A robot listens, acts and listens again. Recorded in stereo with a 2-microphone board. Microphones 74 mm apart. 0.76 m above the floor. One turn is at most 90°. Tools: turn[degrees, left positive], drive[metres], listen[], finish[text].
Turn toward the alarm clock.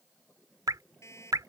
Thought: The alarm clock: about 45° left or 135° left.
Action: turn[45]
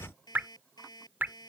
Thought: So it is at 90° left.
Action: turn[90]
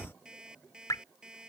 Thought: The alarm clock is now 10° right.
Action: turn[-10]
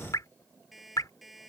Action: finish[Found it: an alarm clock, straight ahead.]